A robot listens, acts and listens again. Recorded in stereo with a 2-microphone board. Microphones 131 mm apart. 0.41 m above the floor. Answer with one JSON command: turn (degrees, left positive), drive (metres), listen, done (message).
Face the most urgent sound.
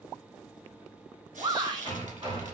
{"turn": -40}
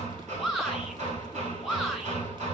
{"done": "Found it: a shout, straight ahead, 1 to 2 m away."}